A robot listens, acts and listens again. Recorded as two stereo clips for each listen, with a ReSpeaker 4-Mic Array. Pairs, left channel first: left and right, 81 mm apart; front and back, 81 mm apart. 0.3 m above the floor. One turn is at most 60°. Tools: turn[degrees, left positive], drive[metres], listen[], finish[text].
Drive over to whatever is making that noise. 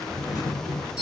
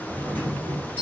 Thought: The doorbell: 65° left.
Action: turn[60]
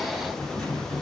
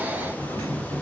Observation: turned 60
Action: drive[1.0]
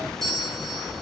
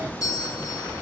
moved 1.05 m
Action: drive[1.0]
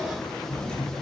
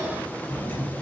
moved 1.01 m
Thought: The doorbell is now 20° left.
Action: turn[20]
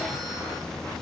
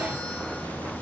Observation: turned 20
Action: listen[]
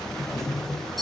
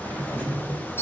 Action: drive[1.0]
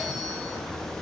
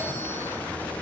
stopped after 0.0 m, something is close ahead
Action: listen[]
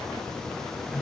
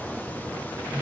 Action: listen[]
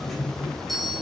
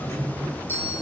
Action: finish[I am next to the doorbell.]